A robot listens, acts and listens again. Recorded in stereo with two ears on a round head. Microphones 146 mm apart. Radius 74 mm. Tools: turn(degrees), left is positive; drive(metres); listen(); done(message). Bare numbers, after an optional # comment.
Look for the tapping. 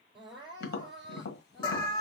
# The tapping: about 65° left or 115° left.
turn(65)
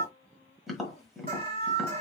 done("Facing the tapping.")